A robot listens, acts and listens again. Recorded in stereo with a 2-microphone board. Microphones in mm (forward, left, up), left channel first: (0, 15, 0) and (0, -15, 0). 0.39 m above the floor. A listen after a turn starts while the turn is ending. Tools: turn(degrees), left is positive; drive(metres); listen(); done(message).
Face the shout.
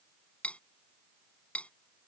listen()
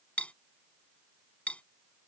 listen()
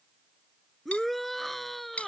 turn(degrees=30)
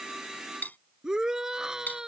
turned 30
turn(degrees=-20)
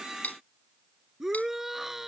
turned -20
turn(degrees=-10)
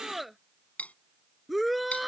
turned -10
done("Found it: a shout, straight ahead.")